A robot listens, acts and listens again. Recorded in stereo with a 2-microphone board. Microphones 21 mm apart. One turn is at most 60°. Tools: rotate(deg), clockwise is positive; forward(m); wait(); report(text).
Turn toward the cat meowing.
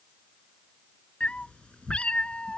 rotate(-60)
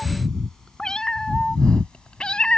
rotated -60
rotate(-60)
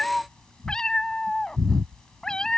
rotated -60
rotate(-40)
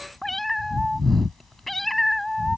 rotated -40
rotate(-10)
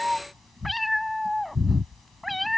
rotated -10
report("Facing the cat meowing.")